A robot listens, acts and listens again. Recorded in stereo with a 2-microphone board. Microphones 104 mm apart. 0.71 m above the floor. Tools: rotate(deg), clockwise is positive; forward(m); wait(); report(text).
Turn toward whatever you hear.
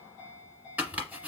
rotate(15)
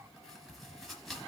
report("Facing the chopping.")